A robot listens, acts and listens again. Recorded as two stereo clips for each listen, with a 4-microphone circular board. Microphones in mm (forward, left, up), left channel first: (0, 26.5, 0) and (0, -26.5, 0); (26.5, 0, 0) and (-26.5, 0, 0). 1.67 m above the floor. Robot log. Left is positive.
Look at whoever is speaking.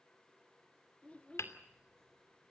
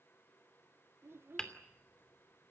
note: The child speaking: 150° left.
cmd yaw +150
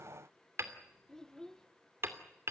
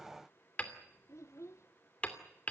note: The child speaking is now 10° left.
cmd yaw +10
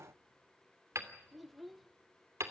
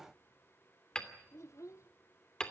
end: Found it: a child speaking, straight ahead, 1 to 2 m away.